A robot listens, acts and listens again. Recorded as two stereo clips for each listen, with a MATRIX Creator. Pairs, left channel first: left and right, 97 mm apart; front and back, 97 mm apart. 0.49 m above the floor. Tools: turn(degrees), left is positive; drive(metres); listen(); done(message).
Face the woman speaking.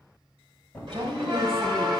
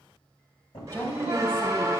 turn(degrees=-60)
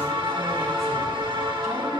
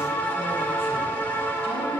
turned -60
listen()
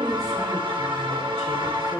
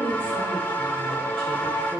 done("Found it: a woman speaking, straight ahead.")